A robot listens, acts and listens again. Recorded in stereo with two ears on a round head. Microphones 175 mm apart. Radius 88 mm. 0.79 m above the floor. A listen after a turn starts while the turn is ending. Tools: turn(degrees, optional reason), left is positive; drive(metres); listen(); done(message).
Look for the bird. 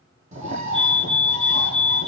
turn(degrees=-40, reason="The bird: about 40° right or 140° right.")
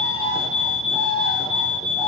done("Facing the bird, over 4 m away.")